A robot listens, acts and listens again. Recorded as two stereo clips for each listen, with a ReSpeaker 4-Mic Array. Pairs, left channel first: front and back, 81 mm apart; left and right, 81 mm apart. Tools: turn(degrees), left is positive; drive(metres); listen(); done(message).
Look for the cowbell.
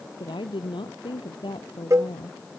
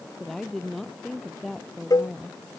turn(degrees=130)
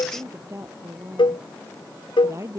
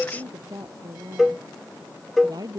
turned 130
done("Facing the cowbell.")